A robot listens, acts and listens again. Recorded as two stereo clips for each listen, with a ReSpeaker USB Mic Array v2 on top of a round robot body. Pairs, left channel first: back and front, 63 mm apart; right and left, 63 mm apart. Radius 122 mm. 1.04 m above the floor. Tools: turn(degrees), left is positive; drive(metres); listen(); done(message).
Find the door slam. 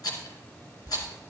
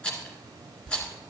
listen()
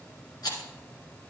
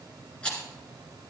listen()
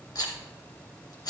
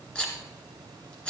done("I can't make out a door slam, only a rattle.")